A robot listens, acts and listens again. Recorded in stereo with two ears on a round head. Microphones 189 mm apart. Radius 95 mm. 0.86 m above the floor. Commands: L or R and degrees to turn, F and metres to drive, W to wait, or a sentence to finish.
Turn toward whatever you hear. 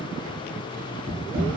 R60
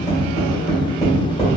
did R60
Facing the tapping.